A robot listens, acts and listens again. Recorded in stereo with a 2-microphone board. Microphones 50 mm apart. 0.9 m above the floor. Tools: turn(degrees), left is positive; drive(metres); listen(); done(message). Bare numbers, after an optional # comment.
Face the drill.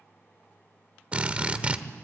# The drill: about 25° right or 155° right.
turn(-25)
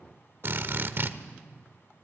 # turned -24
# So it is at 130° right.
turn(-130)
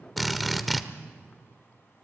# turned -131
done("Facing the drill.")